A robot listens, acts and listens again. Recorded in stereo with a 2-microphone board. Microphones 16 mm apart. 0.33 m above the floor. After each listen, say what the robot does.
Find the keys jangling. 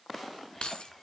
Turn 70° left.
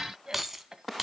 Turn 20° right.
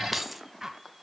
Turn 10° right.
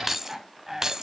Turn 35° right.
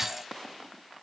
Keep listening.
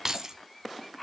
Turn 35° right.
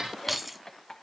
Turn 10° right.
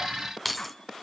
Found it: keys jangling, straight ahead.